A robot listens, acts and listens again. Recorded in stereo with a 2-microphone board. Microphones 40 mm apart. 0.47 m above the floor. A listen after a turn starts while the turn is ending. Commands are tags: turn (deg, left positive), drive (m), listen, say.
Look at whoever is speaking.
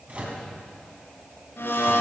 <listen/>
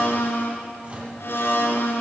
<listen/>
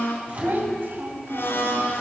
<turn deg="-60"/>
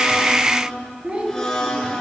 <turn deg="-25"/>
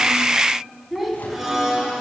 <say>Found it: a child speaking, straight ahead, 2 to 4 m away.</say>